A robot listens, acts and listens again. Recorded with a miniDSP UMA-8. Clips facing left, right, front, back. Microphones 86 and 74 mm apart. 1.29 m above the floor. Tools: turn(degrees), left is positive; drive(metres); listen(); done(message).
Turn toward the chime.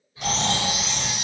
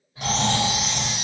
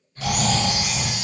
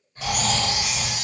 turn(degrees=-75)
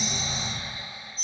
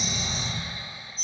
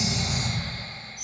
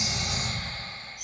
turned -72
done("Found it: a chime, straight ahead.")